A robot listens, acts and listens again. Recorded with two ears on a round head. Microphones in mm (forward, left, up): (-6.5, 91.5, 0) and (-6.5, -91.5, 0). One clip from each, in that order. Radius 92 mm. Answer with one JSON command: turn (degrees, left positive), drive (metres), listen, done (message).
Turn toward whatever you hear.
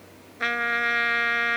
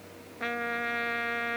{"turn": 50}
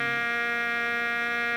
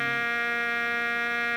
{"done": "Found it: a trumpet, straight ahead."}